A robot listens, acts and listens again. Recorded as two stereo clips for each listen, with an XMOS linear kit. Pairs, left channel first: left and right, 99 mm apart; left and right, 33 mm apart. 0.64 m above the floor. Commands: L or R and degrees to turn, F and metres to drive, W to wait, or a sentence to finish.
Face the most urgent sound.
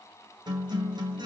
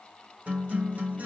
W
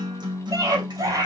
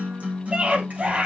R35
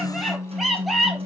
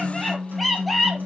Facing the scream, over 4 m away.